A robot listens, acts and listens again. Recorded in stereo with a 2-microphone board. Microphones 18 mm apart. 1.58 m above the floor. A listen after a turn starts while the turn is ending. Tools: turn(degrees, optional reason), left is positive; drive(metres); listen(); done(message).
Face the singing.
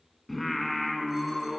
turn(degrees=-30)
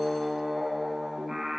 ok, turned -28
turn(degrees=-145, reason="So it is at 145° right.")
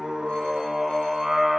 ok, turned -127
turn(degrees=-20, reason="The singing is now 20° right.")
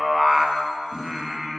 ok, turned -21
done("Facing the singing, 1 to 2 m away.")